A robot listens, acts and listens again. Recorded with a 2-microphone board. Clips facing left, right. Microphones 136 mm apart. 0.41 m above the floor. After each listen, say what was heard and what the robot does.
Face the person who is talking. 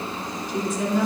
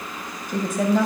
The woman speaking: about 60° right or 120° right. Turn 60° right.
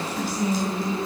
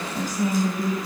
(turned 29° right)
The woman speaking: about 50° right or 130° right. Turn 50° right.
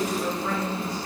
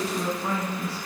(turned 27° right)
So it is at 30° right. Turn 30° right.
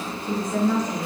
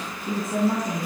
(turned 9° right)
The woman speaking is now 25° right. Turn 25° right.
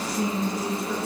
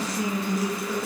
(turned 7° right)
The woman speaking is now 20° right. Turn 20° right.
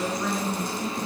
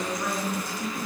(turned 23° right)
Found it: a woman speaking, straight ahead.